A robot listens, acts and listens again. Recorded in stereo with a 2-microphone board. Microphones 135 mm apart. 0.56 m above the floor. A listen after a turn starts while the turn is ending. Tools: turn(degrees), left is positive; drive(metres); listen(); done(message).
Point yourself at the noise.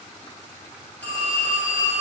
turn(degrees=30)
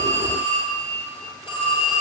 turn(degrees=140)
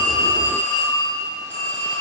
turn(degrees=15)
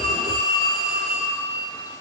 done("Facing the phone ringing, 2 to 4 m away.")